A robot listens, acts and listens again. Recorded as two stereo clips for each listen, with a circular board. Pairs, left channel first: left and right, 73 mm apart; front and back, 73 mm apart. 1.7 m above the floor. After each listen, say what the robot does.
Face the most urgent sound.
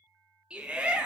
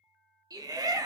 Turn 165° right.
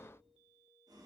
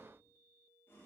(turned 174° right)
Turn 10° left.
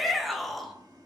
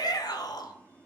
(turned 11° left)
Facing the shout.